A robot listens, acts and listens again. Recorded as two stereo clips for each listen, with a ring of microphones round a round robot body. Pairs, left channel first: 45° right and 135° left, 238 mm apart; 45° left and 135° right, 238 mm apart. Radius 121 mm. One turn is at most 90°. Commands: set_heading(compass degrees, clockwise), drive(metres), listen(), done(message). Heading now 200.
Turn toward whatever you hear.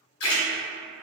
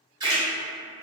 set_heading(260)
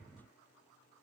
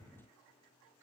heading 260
done("Facing where the splash came from. I can't hear it now.")